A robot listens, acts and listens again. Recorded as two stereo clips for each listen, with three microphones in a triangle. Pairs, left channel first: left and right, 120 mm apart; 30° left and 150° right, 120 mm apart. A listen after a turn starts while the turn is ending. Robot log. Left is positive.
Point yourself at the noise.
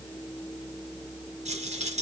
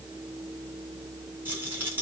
note: The rattle: 75° right.
cmd yaw -75
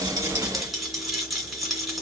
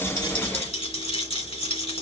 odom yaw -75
end: Facing the rattle, 2 to 4 m away.